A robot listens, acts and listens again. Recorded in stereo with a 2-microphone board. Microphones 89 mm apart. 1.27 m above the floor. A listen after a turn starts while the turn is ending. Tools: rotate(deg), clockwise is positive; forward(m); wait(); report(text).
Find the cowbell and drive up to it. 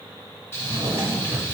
wait()
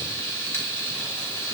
wait()
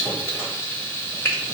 report("I can't make out a cowbell, only a drawer and frying.")